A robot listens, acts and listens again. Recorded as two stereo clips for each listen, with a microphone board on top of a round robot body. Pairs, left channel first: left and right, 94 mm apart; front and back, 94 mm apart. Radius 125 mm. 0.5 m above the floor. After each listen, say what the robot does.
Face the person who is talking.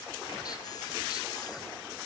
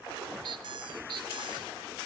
Keep listening.
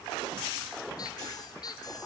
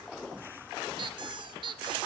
Keep listening.
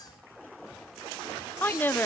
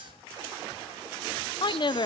Turn 25° left.
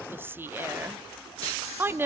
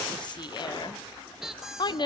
Turn 25° right.
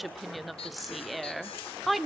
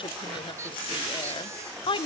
Facing the woman speaking.